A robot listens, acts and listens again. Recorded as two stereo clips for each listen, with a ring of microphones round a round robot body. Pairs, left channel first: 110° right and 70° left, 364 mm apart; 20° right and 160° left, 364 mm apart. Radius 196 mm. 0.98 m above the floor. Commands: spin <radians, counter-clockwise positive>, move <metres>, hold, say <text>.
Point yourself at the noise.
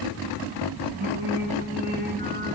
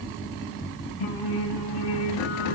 say Facing the singing, 2 to 4 m away.